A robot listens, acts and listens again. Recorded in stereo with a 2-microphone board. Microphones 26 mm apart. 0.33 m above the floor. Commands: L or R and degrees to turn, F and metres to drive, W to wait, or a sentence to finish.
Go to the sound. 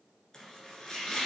L20
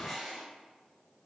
F1.0
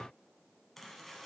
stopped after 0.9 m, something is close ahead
I am next to the chopping.